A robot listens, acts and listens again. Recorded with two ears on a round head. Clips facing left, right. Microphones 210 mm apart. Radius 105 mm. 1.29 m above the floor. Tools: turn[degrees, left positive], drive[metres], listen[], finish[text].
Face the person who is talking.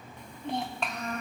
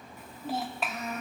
Action: turn[-30]
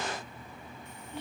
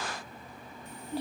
Thought: So it is at 145° right.
Action: turn[-145]
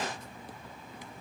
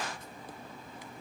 Action: listen[]
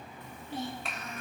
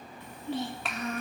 Thought: The child speaking is now 60° right.
Action: turn[-60]
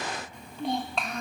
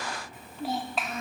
Action: finish[Facing the child speaking.]